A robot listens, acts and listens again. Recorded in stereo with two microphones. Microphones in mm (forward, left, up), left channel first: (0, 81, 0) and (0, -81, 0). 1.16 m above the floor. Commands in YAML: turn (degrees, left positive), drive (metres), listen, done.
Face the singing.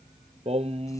turn: -40
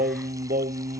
turn: -110
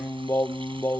turn: 15
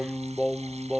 done: "Facing the singing."